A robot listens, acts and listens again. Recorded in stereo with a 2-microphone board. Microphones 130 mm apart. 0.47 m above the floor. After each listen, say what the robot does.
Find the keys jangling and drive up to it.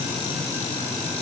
Keep listening.
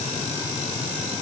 Keep listening.
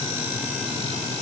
I can't make out keys jangling to turn to.